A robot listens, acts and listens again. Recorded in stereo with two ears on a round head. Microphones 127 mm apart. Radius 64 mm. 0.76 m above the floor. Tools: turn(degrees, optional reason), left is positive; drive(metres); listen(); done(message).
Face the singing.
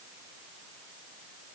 listen()
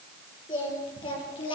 turn(degrees=35, reason="The singing: about 35° left or 145° left.")
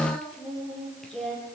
done("Found it: singing, straight ahead, over 4 m away.")